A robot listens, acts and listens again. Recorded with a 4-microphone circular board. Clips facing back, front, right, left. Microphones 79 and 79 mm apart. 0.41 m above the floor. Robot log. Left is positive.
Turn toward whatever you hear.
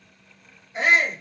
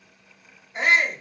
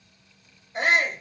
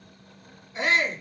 note: The shout: 90° right.
cmd yaw -90
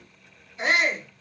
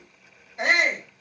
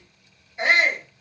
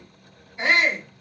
note: The shout is now 25° right.
cmd yaw -25
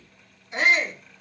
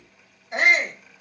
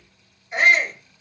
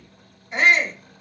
end: Facing the shout.